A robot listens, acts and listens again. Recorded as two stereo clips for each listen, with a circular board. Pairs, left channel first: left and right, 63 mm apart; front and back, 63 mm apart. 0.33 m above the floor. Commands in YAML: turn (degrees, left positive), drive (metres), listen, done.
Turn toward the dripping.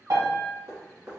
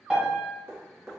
turn: -135
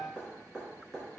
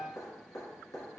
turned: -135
done: "Facing the dripping."